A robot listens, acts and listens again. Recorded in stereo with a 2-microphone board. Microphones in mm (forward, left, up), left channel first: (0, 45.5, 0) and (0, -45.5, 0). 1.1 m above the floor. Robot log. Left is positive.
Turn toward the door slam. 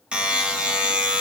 cmd idle
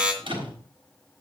cmd yaw -90
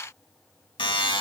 end: Facing where the door slam came from. I can't hear it now.